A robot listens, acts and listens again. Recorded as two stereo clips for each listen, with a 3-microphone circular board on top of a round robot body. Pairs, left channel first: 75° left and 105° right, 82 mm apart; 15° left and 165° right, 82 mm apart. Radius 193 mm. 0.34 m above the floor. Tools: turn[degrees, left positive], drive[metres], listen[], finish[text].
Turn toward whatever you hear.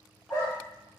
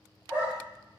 Thought: The dog barking: 125° left.
Action: turn[125]
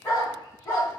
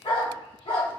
Thought: The dog barking is now 20° left.
Action: turn[20]
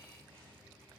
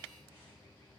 Action: listen[]
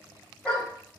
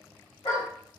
Action: finish[Facing the dog barking, 1 to 2 m away.]